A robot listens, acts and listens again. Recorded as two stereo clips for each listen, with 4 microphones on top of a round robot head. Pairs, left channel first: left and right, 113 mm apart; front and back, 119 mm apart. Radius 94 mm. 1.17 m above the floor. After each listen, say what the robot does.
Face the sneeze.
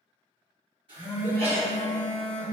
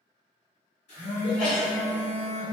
Turn 85° right.
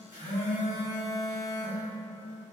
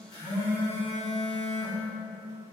I heard a sneeze from this way, but can't make it out now.